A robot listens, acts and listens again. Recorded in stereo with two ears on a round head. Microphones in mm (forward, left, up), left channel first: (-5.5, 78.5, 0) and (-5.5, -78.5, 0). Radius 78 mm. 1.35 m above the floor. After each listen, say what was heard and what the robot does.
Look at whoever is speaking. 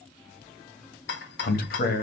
The man speaking: about 55° left or 125° left. Turn 55° left.
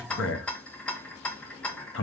So it is at 70° left. Turn 70° left.
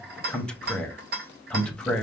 Facing the man speaking, under 1 m away.